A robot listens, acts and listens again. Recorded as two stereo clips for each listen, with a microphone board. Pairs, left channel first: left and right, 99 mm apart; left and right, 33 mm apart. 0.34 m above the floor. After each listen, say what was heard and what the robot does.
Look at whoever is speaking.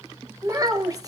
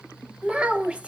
The child speaking: about 35° right or 145° right. Turn 35° right.
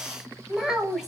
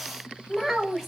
Facing the child speaking, 1 to 2 m away.